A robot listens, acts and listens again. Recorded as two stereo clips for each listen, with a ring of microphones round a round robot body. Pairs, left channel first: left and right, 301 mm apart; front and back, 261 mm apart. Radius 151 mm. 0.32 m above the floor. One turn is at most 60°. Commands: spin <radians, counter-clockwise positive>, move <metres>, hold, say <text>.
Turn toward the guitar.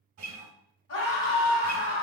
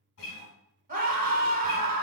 spin -0.79
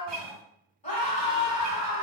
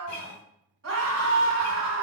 spin -0.35
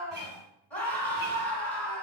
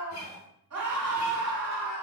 say Found it: a guitar, straight ahead, 1 to 2 m away.